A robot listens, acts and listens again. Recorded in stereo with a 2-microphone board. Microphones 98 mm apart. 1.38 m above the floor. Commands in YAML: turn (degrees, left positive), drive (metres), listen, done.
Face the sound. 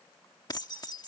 turn: 40
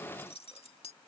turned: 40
turn: 95
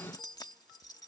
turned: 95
turn: 45
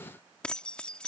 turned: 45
turn: 10
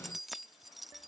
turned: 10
done: "Facing the keys jangling."